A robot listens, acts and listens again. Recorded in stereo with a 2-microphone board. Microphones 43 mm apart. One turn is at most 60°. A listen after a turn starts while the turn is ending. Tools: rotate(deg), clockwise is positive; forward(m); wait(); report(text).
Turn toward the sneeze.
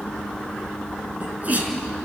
rotate(35)
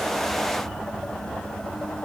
wait()
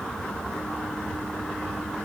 report("I heard a sneeze, but can't make it out now. It was about straight ahead or 110° right.")